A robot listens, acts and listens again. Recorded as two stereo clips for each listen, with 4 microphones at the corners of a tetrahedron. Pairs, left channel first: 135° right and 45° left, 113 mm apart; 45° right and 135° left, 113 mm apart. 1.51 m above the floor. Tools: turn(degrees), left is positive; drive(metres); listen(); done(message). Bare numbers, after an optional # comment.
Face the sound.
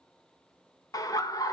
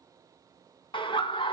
# The laughter: 80° right.
turn(-80)
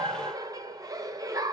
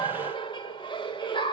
# The laughter is now 10° right.
turn(-10)
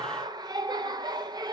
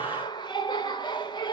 done("Facing the laughter, 1 to 2 m away.")